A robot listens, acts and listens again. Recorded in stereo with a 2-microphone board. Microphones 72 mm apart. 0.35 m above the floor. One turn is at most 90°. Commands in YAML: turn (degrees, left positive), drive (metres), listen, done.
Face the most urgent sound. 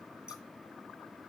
listen: true
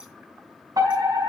turn: -60
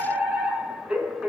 turn: -15
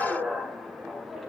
done: "Found it: a fire alarm, straight ahead, over 4 m away."